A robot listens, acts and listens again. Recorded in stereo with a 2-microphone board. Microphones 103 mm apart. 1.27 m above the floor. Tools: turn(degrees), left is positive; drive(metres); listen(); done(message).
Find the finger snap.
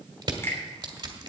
turn(degrees=25)
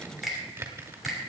done("Found it: a finger snap, straight ahead, 2 to 4 m away.")